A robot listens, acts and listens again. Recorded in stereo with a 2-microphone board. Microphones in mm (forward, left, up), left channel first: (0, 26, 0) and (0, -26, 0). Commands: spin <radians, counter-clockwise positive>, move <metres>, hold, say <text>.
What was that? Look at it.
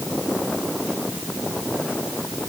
hold
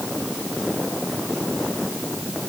hold
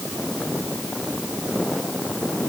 say I can't make out anything.